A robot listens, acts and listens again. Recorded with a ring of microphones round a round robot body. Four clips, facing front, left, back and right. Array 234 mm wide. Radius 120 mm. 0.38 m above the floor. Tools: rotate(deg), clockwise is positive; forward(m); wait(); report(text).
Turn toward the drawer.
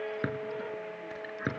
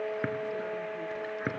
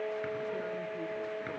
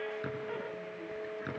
rotate(-45)
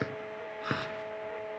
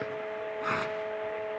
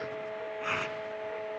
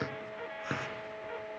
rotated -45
wait()
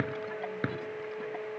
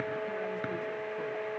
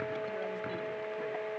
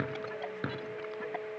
rotate(10)
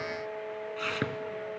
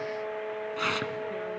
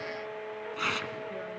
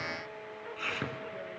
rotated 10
wait()
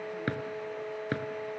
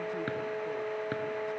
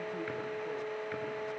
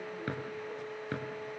report("Found it: a drawer, straight ahead.")